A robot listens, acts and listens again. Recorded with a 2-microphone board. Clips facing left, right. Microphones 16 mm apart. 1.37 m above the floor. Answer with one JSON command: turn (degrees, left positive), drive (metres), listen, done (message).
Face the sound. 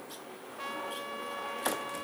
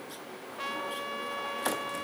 {"turn": -20}
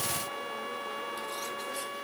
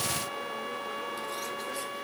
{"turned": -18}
{"done": "Facing the trumpet."}